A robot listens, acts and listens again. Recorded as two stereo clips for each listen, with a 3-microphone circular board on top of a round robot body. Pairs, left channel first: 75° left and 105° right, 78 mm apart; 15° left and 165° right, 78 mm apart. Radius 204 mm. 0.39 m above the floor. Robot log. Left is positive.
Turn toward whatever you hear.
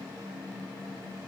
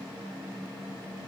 cmd idle
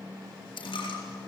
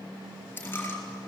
note: The dropped coin: 80° left.
cmd yaw +80
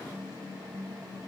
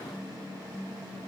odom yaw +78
end: I heard a dropped coin from this way, but can't make it out now.